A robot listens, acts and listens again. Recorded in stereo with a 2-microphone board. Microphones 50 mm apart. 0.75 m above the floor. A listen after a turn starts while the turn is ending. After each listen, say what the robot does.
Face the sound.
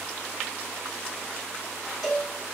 Turn 30° right.
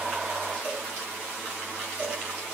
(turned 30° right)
Turn 145° right.
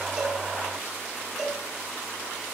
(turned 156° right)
Turn 10° left.
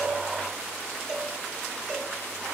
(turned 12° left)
Facing the cowbell, 2 to 4 m away.